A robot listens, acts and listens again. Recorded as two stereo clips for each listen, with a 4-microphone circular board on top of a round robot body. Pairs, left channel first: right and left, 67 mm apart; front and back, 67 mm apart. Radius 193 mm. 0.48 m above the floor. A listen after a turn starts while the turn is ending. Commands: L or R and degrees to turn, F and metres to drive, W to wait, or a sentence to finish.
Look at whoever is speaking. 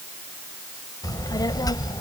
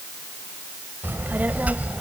R110
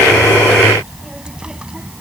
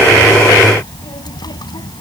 L15
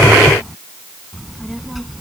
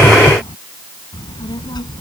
Found it: a child speaking, straight ahead.